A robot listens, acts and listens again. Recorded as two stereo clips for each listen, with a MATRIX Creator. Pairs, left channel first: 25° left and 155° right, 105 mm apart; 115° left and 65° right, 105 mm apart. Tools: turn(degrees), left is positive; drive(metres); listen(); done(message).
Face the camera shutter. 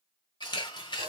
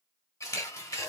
turn(degrees=60)
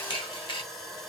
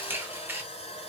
done("Facing the camera shutter.")